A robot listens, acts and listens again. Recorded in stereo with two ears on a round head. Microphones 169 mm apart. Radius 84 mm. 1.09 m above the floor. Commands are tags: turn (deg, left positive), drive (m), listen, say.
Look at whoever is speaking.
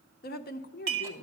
<turn deg="50"/>
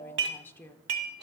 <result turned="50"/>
<turn deg="10"/>
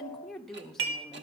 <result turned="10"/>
<say>Facing the woman speaking.</say>